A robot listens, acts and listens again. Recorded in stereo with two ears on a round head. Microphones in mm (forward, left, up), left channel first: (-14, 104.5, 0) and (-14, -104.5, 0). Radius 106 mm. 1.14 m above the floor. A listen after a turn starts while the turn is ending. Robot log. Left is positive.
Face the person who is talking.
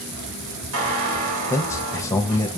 cmd yaw +30
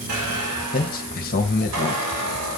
note: So it is at 135° left.
cmd yaw +135
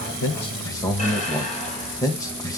note: The man speaking is now 15° left.
cmd yaw +15
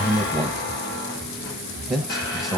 end: Facing the man speaking.